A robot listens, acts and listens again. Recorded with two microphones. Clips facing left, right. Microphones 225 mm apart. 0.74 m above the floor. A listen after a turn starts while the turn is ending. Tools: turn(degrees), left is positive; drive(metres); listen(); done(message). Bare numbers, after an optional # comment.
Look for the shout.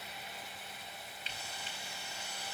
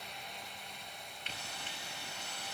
listen()
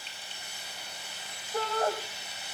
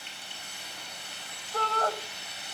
# The shout: about 15° left or 165° left.
turn(15)
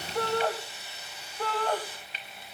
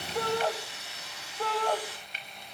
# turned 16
done("Facing the shout, 2 to 4 m away.")